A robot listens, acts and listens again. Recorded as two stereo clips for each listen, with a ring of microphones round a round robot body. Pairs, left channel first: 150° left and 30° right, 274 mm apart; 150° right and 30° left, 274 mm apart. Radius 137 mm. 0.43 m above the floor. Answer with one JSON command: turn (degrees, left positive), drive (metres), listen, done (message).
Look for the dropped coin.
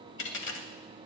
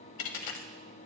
{"turn": -160}
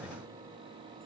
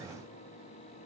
{"done": "I heard a dropped coin from this way, but can't make it out now."}